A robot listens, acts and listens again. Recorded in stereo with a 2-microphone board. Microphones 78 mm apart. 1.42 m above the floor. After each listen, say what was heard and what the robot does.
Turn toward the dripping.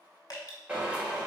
The dripping: about 60° left or 120° left. Turn 60° left.
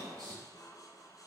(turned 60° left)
Keep listening.
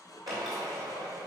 Keep listening.
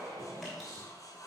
I heard dripping, but can't make it out now. It was about straight ahead or 60° left.